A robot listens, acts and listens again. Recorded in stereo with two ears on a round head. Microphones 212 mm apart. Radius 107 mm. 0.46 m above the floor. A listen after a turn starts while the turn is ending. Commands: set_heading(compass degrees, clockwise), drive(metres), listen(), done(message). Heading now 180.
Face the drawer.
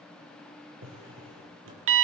set_heading(240)
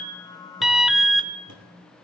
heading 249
listen()
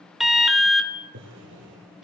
set_heading(299)
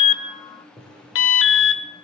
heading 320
set_heading(300)
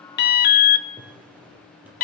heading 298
listen()
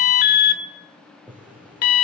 done("Found it: a drawer, straight ahead.")